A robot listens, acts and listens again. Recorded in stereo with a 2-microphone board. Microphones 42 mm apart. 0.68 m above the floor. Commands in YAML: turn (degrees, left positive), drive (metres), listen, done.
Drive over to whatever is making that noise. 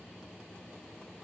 listen: true
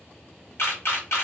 turn: 65
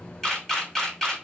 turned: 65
turn: 10
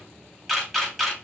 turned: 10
drive: 1.0
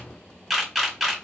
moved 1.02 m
drive: 1.0
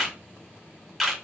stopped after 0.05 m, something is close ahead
done: "Arrived at the camera shutter, straight ahead."